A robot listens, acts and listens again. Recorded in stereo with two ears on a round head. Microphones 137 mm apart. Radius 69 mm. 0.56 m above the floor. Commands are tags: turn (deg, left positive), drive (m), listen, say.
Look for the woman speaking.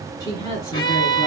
<turn deg="20"/>
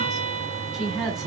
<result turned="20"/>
<say>Found it: a woman speaking, straight ahead.</say>